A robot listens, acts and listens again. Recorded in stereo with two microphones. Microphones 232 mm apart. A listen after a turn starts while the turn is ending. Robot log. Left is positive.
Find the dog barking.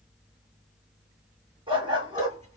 note: The dog barking: about 20° right or 160° right.
cmd yaw -20
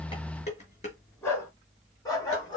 note: So it is at 15° left.
cmd yaw +15
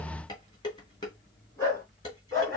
note: The dog barking is now 15° left.
cmd yaw +15
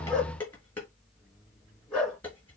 end: Found it: a dog barking, straight ahead.